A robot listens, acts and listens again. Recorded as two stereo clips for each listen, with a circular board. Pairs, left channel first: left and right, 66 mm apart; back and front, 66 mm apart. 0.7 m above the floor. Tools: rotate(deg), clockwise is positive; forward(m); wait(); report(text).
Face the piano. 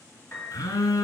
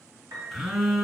rotate(-30)
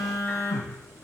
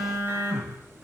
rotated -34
wait()
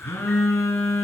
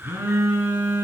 wait()
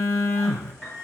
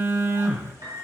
report("Facing the piano.")